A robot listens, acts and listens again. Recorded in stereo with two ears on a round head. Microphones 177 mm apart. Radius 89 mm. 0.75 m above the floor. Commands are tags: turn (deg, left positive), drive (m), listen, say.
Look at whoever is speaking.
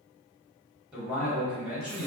<turn deg="-30"/>
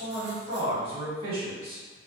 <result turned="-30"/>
<turn deg="-145"/>
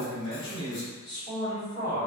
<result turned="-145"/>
<turn deg="20"/>
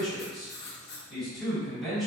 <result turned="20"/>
<say>Facing the man speaking.</say>